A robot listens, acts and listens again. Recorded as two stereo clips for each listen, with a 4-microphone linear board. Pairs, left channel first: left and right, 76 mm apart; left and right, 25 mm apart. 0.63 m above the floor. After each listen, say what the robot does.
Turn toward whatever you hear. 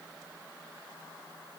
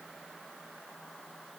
Keep listening.
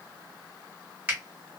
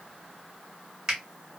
Turn 15° right.
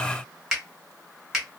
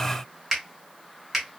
Facing the finger snap, 1 to 2 m away.